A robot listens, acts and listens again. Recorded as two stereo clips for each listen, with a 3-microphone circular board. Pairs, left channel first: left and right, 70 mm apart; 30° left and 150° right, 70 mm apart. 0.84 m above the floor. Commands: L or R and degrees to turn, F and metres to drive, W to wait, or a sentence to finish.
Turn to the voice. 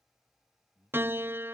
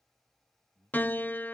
R140
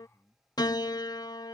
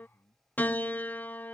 R10
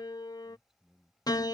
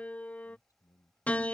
Found it: a man speaking, straight ahead.